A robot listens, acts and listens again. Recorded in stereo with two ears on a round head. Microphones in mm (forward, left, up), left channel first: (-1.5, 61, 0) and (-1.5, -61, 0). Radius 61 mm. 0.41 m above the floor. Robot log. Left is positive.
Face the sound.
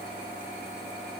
cmd idle
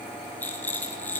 cmd yaw +30
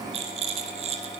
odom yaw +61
note: So it is at 45° right.
cmd yaw -45
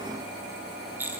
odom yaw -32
note: The rattle is now 15° right.
cmd yaw -15
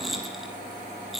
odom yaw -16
end: Facing the rattle.